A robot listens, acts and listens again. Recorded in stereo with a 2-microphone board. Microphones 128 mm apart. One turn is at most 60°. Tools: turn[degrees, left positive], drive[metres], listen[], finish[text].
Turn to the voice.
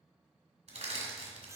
Action: listen[]
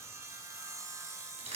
Action: listen[]
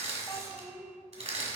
Thought: The child speaking: about 25° left or 155° left.
Action: turn[25]
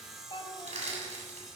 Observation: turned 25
Thought: So it is at 125° left.
Action: turn[60]
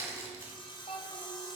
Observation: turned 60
Thought: The child speaking is now 70° left.
Action: turn[60]
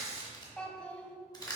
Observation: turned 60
Thought: The child speaking is now 10° left.
Action: turn[10]
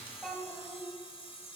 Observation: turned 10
Action: finish[Found it: a child speaking, straight ahead.]